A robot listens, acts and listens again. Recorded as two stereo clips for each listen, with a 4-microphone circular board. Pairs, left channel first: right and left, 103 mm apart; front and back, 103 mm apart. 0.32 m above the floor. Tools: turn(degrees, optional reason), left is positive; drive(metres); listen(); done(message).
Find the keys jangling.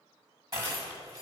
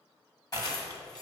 turn(degrees=40, reason="The keys jangling: 40° left.")
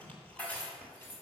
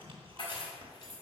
turn(degrees=-25, reason="The keys jangling is now 25° right.")
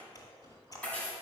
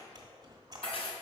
turn(degrees=-15, reason="The keys jangling is now 15° right.")
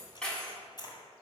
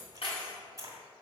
turn(degrees=-10, reason="The keys jangling is now 10° right.")
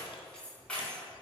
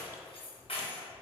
turn(degrees=-10, reason="The keys jangling is now 10° right.")
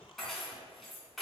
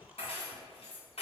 done("Facing the keys jangling.")